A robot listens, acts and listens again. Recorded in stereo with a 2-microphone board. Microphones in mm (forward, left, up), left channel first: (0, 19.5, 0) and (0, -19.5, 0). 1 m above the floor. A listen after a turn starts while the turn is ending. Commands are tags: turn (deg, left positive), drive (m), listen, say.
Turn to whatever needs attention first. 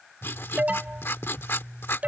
<turn deg="-40"/>
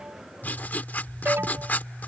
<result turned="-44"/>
<turn deg="-95"/>
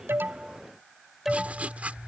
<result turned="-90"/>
<turn deg="-10"/>
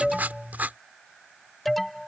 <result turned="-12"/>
<say>Found it: an alarm, straight ahead.</say>